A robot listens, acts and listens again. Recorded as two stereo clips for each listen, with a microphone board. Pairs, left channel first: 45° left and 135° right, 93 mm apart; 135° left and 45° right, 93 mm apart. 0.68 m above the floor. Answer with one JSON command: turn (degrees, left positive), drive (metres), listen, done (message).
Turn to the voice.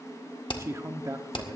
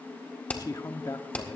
{"turn": 175}
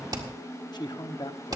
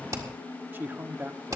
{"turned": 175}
{"turn": 20}
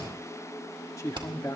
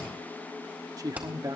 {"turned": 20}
{"done": "Found it: a man speaking, straight ahead."}